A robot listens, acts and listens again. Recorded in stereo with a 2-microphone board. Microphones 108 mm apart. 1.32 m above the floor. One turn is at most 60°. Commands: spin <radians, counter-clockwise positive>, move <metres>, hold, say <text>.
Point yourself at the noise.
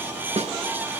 spin -1.05
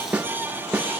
spin -0.17
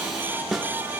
say Found it: a snare drum, straight ahead, 1 to 2 m away.